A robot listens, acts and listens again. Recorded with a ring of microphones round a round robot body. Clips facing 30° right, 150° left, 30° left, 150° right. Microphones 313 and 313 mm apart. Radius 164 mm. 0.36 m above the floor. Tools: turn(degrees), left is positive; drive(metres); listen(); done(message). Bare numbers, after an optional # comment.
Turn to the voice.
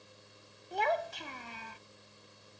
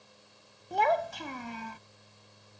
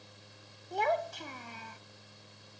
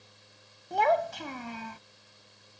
# The child speaking: 175° right.
turn(-175)
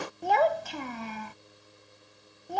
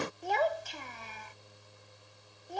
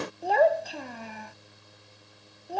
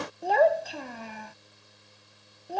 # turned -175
# The child speaking is now 60° right.
turn(-60)
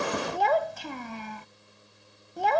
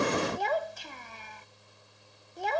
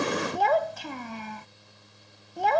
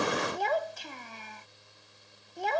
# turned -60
done("Facing the child speaking.")